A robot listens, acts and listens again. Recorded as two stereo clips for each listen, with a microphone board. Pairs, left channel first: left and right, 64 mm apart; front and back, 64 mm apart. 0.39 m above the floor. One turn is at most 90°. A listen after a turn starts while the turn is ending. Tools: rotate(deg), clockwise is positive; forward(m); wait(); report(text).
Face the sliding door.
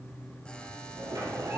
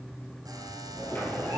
rotate(65)
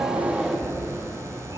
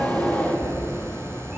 report("Found it: a sliding door, straight ahead.")